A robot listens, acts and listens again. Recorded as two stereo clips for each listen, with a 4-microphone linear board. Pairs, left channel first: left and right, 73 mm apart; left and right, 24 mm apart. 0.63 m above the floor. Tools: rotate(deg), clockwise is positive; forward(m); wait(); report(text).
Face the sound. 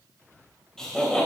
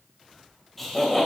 rotate(-30)
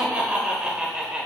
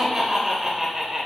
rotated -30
rotate(10)
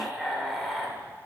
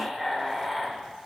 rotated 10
report("Found it: laughter, straight ahead.")